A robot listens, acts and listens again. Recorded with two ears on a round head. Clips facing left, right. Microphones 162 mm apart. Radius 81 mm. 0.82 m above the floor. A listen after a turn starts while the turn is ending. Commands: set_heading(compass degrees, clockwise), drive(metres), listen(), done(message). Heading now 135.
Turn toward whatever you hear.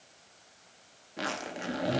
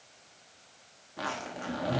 set_heading(110)
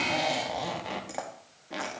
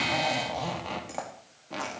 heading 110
set_heading(100)
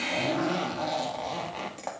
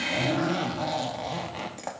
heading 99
done("Found it: a zipper, straight ahead, 1 to 2 m away.")